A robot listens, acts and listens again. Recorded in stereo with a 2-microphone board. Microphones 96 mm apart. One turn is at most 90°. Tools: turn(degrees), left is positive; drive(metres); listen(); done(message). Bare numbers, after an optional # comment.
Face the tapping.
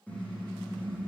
listen()
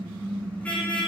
listen()
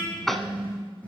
turn(30)
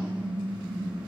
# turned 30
listen()
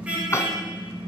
# So it is at 150° left.
turn(90)
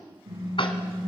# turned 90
# Nothing new. It was at 60° left.
turn(60)
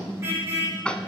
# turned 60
# The tapping is now 10° left.
turn(10)
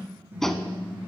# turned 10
done("Facing the tapping, 1 to 2 m away.")